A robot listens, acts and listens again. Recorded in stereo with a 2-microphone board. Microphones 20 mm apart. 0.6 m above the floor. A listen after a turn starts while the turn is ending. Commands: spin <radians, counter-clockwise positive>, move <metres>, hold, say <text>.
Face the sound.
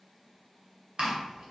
spin -0.87
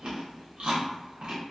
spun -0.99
spin -1.22
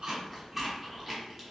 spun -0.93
spin -0.26
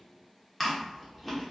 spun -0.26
say Found it: chewing, straight ahead, under 1 m away.